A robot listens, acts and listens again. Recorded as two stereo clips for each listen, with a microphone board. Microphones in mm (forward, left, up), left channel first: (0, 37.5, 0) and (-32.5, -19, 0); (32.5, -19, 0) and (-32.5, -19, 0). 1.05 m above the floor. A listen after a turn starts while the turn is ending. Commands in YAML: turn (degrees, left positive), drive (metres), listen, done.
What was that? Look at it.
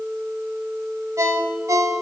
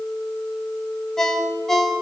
turn: -85
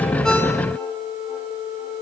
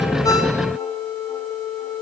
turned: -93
turn: 10
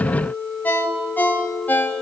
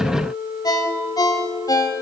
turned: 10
done: "Found it: a ringtone, straight ahead, 2 to 4 m away."